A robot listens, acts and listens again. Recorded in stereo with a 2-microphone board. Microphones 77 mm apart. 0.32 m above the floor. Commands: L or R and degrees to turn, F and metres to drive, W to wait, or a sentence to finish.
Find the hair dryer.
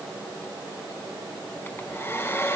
L30
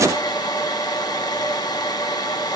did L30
L120
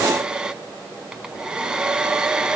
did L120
R10
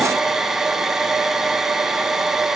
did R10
Found it: a hair dryer, straight ahead, under 1 m away.